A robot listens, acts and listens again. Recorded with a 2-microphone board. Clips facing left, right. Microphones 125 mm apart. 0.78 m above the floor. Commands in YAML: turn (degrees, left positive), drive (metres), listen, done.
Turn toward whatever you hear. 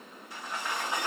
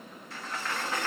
turn: 30
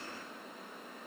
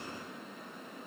listen: true
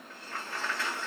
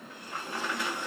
turn: -15
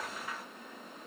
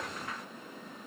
done: "Found it: a sliding door, straight ahead, under 1 m away."